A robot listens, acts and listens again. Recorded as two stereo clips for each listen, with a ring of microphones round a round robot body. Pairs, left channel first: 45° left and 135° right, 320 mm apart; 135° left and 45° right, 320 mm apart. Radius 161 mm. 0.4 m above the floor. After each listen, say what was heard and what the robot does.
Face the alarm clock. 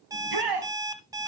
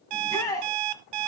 The alarm clock: 55° right. Turn 55° right.
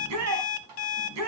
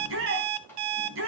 Found it: an alarm clock, straight ahead, 1 to 2 m away.